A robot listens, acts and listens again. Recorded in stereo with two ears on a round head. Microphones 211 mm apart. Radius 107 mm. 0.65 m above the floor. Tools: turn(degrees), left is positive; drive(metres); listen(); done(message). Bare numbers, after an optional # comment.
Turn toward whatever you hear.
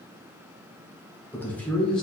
turn(30)
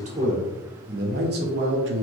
# So it is at 55° right.
turn(-55)
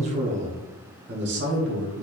# The man speaking is now 55° right.
turn(-55)
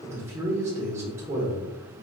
# The man speaking is now 10° right.
turn(-10)
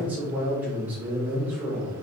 done("Found it: a man speaking, straight ahead, 1 to 2 m away.")